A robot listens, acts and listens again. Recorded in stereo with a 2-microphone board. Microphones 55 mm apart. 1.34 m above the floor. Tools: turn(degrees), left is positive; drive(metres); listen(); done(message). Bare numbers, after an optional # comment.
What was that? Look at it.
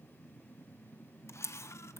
# The camera shutter: about 60° left or 120° left.
turn(60)
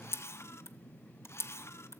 # So it is at 55° left.
turn(55)
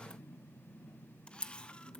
# The camera shutter is now 20° left.
turn(20)
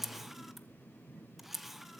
done("Found it: a camera shutter, straight ahead, under 1 m away.")